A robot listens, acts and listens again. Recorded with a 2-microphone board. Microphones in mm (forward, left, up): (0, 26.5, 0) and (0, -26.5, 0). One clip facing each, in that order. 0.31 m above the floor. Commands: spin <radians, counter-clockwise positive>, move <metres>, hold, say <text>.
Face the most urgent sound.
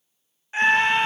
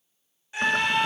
spin 0.61
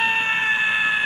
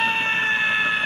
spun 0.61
spin 0.17
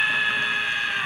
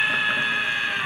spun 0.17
say Facing the scream.